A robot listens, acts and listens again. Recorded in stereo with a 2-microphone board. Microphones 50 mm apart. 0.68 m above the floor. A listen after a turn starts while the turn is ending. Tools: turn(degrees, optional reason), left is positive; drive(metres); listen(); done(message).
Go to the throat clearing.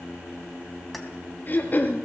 turn(degrees=35, reason="The throat clearing: about 35° left or 145° left.")
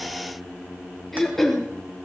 drive(metres=1.0)
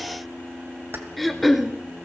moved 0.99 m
drive(metres=1.0)
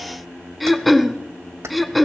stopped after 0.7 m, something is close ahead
done("Arrived at the throat clearing, straight ahead.")